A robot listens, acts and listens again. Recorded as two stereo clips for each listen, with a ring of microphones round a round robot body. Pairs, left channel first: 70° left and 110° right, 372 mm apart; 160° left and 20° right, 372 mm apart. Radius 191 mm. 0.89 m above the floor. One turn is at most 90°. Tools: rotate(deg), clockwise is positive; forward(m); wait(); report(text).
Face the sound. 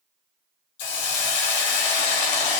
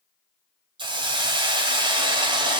rotate(-55)
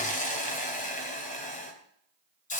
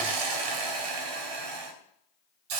report("Found it: a hiss, straight ahead, 2 to 4 m away.")